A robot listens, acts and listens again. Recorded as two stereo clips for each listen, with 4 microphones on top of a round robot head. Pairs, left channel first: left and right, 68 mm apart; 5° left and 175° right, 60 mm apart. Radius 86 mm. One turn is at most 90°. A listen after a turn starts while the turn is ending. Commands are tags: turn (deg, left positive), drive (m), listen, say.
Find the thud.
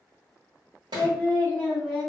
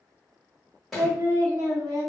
<turn deg="-85"/>
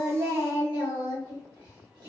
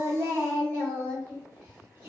<say>Facing where the thud came from. I can't hear it now.</say>